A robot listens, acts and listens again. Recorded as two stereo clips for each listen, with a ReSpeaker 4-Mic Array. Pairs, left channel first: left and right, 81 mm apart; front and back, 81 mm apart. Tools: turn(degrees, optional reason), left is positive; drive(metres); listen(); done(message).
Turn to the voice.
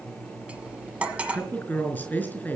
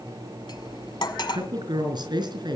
turn(degrees=155, reason="The woman speaking: 155° left.")
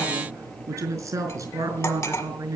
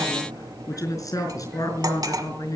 turn(degrees=-45, reason="The woman speaking is now 45° right.")
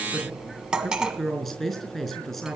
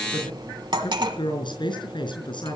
done("Facing the woman speaking.")